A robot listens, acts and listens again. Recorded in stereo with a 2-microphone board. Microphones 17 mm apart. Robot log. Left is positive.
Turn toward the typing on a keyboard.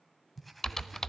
note: The typing on a keyboard: about 25° left or 155° left.
cmd yaw +25
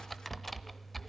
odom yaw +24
note: So it is at 10° left.
cmd yaw +10
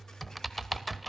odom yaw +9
end: Found it: typing on a keyboard, straight ahead.